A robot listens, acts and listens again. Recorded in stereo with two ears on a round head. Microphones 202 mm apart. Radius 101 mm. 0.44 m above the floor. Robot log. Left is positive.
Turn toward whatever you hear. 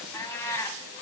cmd yaw +30
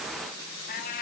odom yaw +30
note: So it is at 140° left.
cmd yaw +140
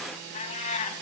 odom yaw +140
note: The cat meowing is now 30° left.
cmd yaw +30
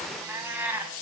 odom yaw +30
note: The cat meowing is now 10° right.
cmd yaw -10
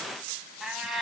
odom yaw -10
end: Facing the cat meowing, 1 to 2 m away.